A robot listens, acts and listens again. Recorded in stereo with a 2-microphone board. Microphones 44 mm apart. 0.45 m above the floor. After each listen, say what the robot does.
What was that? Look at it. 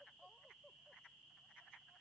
Keep listening.
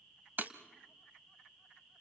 Turn 45° right.
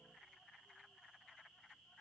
Keep listening.
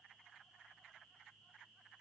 I heard breaking glass, but can't make it out now. It was about straight ahead or 90° right.